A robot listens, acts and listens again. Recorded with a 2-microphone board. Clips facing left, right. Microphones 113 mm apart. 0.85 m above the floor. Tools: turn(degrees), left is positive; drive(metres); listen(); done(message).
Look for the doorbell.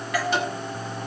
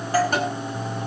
turn(degrees=-30)
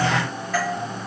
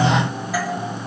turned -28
turn(degrees=-10)
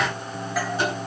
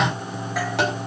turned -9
listen()
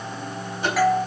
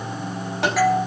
done("Facing the doorbell.")